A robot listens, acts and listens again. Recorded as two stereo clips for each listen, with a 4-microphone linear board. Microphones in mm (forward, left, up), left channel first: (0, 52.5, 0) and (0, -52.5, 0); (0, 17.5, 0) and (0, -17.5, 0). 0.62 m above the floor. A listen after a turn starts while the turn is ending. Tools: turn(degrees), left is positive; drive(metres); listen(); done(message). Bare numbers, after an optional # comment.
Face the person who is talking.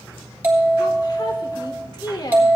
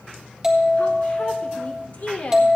# The woman speaking: about 45° left or 135° left.
turn(45)
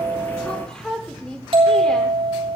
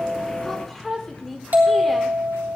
# So it is at 10° left.
turn(10)
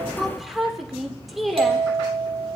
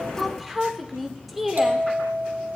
done("Facing the woman speaking, 2 to 4 m away.")